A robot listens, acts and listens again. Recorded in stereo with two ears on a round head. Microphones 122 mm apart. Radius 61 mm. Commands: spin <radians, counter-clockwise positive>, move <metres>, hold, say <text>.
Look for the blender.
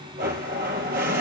spin -1.31
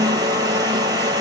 spin -0.52
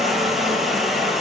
say Found it: a blender, straight ahead, 1 to 2 m away.